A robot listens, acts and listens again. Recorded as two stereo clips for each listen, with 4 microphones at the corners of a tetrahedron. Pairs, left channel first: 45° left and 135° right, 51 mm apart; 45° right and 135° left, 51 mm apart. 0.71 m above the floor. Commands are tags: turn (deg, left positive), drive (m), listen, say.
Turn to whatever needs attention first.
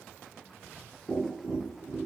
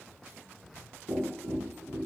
<listen/>
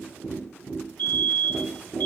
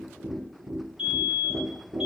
<turn deg="70"/>
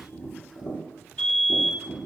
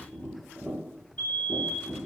<turn deg="-15"/>
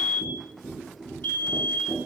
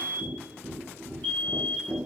<say>Found it: a fire alarm, straight ahead.</say>